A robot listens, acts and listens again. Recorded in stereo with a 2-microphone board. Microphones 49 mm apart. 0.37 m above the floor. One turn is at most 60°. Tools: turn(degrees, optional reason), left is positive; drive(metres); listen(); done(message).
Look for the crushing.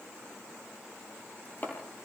listen()
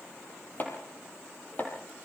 listen()
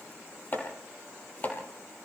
done("I can't make out crushing, only chopping.")